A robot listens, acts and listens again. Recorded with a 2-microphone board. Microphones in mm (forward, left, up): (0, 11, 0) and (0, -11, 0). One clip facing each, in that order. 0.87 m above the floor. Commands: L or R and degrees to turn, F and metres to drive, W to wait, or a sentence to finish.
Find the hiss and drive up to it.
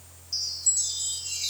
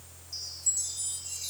W
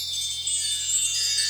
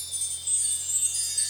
W
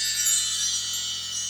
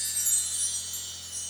I can't make out a hiss to turn to.